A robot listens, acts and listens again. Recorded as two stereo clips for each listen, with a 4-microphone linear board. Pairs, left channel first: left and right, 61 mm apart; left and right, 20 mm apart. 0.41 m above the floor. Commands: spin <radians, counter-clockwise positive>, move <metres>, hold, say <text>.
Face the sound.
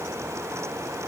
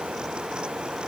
hold
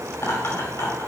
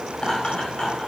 spin 0.79
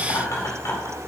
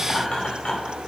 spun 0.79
spin 1.40
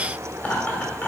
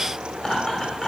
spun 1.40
spin 0.61
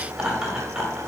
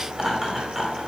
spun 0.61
spin -0.26
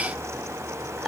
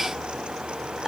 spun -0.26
say Found it: laughter, straight ahead.